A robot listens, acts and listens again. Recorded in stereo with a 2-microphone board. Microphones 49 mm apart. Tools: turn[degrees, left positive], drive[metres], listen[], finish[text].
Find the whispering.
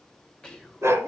Action: turn[30]
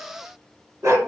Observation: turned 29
Action: listen[]
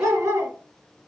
Action: listen[]
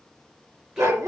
Action: finish[I heard whispering, but can't make it out now. It was about 15° right or 135° left.]